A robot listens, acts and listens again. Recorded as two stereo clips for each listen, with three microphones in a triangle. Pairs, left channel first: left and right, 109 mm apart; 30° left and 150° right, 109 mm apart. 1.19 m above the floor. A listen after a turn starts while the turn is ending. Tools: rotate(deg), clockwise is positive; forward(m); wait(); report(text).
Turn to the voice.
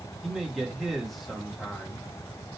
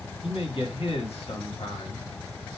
report("Facing the man speaking, 1 to 2 m away.")